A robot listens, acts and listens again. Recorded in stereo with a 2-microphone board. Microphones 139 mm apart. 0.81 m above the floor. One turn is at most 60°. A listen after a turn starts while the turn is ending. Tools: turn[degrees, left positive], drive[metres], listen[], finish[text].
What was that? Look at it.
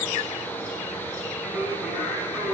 Action: turn[-30]
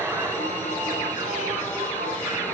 Thought: So it is at 155° right.
Action: turn[-60]
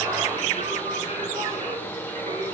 Thought: The singing is now 125° right.
Action: turn[-60]
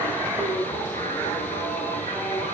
Thought: The singing is now 85° right.
Action: turn[-60]
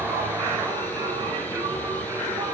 Thought: The singing is now 20° right.
Action: turn[-20]
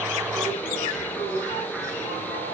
Action: finish[Facing the singing, over 4 m away.]